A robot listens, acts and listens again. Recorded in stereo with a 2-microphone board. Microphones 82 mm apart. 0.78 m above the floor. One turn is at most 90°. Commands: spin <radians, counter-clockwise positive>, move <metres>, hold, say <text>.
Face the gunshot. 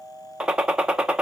spin -0.52
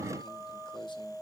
hold
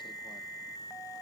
say I heard a gunshot, but can't make it out now. It was about 20° left or 140° right.